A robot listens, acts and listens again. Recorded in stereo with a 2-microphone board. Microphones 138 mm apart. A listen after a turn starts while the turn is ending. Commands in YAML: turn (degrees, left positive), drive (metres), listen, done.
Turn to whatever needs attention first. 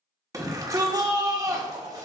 turn: -25
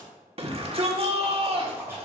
turn: -125
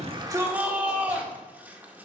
turn: -15
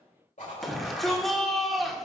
done: "Found it: a shout, straight ahead, 1 to 2 m away."